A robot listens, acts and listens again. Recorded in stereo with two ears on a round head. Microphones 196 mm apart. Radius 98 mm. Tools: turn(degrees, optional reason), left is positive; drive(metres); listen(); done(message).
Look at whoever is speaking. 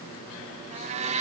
listen()
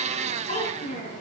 turn(degrees=35, reason="The child speaking: about 35° left or 145° left.")
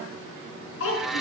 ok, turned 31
turn(degrees=115, reason="So it is at 115° left.")
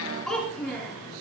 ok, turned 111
done("Found it: a child speaking, straight ahead.")